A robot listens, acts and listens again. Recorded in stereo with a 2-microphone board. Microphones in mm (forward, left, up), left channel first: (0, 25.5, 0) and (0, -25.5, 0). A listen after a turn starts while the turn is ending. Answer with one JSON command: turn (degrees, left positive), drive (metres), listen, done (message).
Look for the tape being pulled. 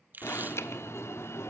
{"turn": -40}
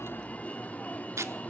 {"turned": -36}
{"turn": -105}
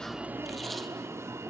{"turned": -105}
{"listen": true}
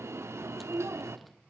{"listen": true}
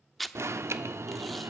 {"done": "Facing the tape being pulled."}